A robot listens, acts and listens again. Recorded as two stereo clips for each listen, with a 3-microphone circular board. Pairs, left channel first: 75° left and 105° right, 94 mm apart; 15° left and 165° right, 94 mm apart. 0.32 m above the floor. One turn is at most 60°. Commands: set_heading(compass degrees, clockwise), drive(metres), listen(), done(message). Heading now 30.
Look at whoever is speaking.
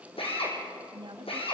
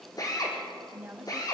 set_heading(90)
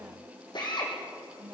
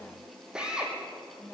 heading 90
set_heading(135)
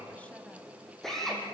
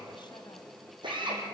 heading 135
listen()
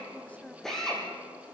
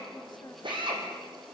done("Found it: a woman speaking, straight ahead, 2 to 4 m away.")